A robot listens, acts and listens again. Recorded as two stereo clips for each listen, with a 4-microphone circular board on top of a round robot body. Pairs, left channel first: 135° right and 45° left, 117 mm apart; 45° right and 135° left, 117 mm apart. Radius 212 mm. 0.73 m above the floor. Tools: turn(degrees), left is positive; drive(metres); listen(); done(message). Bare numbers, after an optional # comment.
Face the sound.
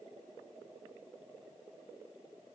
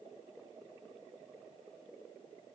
listen()
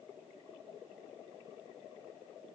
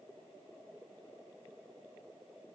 listen()
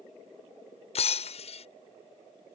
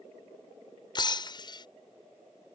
# The breaking glass: 100° right.
turn(-100)
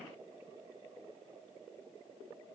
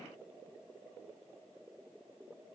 done("Facing where the breaking glass came from. I can't hear it now.")